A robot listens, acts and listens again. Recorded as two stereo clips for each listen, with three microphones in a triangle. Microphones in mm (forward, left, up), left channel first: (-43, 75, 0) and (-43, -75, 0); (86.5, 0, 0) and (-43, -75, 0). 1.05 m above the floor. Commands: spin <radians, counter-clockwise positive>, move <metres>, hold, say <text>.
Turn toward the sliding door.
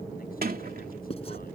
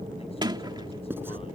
spin -1.57
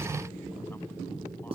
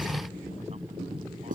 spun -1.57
hold
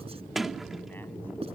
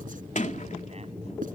say Found it: a sliding door, straight ahead.